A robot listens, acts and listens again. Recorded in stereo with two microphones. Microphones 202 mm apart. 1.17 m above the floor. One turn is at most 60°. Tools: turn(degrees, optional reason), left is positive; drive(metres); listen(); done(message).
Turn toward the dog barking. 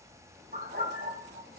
turn(degrees=-60, reason="The dog barking: about 70° right or 110° right.")
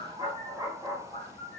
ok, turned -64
turn(degrees=-20, reason="So it is at 20° right.")
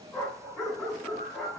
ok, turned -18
done("Facing the dog barking, 2 to 4 m away.")